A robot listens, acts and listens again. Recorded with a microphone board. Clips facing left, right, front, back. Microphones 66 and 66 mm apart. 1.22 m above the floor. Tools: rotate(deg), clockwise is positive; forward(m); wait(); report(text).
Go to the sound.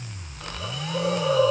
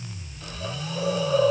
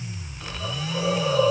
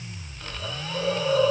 rotate(-90)
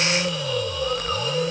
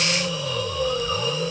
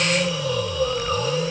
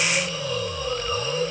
rotate(20)
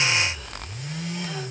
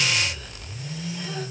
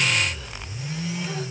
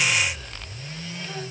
wait()
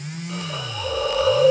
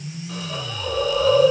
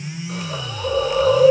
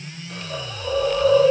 forward(1.0)
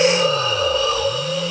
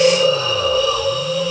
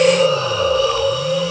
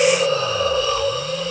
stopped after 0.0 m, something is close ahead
report("Blocked. The hiss is further on, straight ahead.")